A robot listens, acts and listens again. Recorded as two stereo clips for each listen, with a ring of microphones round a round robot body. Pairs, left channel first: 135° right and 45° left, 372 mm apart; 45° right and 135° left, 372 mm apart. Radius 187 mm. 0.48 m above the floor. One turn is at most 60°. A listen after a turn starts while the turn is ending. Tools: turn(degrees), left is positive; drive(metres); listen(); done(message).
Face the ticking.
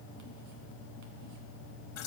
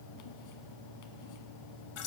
listen()
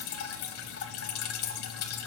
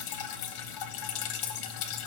listen()
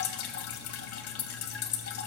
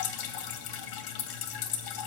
done("I can't make out ticking, only dripping.")